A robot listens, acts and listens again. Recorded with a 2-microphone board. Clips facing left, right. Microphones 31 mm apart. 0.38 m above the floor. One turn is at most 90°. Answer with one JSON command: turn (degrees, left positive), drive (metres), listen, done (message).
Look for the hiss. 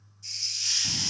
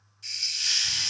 {"turn": -75}
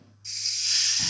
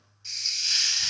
{"turn": -25}
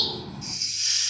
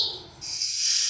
{"turn": 10}
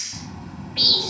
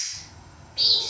{"done": "Found it: a hiss, straight ahead, under 1 m away."}